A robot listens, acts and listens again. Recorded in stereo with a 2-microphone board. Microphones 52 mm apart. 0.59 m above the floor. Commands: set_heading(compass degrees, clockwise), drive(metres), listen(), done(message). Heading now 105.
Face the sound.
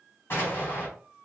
set_heading(65)
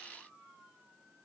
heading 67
listen()
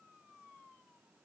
done("I heard an explosion, but can't make it out now. It was about 5° left or 100° left.")